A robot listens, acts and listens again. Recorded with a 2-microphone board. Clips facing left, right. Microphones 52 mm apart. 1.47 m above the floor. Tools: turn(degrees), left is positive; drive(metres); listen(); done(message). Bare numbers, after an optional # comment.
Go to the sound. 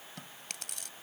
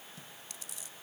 # The chewing: about 70° left or 110° left.
turn(70)
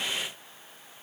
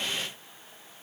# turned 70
listen()
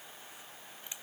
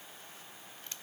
# So it is at 15° left.
turn(15)
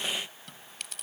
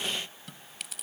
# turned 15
drive(1.0)
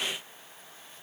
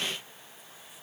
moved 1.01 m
listen()
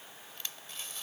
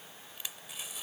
# The chewing is now 15° right.
turn(-15)
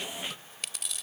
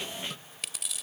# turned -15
drive(1.0)
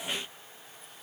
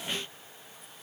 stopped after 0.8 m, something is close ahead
listen()
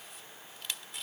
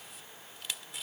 done("I am next to the chewing.")